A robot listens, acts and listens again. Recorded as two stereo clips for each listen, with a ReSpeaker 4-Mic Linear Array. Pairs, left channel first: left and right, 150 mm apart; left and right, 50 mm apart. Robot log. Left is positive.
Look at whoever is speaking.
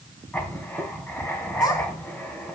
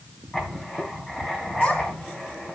note: The child speaking: about 25° left or 155° left.
cmd yaw +25
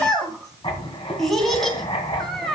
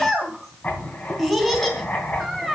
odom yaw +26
end: Found it: a child speaking, straight ahead.